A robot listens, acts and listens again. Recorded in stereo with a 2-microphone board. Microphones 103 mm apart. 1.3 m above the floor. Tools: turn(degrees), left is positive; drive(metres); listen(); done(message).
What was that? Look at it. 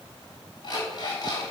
turn(degrees=45)
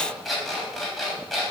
done("Facing the alarm clock.")